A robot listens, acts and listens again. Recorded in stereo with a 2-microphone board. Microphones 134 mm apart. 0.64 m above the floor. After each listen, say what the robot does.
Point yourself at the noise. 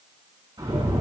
Turn 40° right.
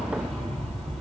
Facing the rattle, over 4 m away.